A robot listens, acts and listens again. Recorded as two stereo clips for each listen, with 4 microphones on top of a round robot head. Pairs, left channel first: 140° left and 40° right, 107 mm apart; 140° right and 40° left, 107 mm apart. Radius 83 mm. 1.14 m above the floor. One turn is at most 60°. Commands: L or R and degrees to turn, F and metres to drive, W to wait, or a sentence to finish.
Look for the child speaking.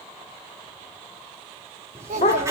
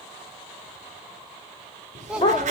R40
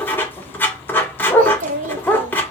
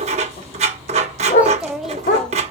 R50
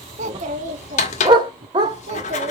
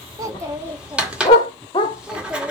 R45
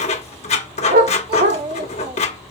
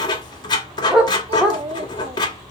Facing the child speaking, 1 to 2 m away.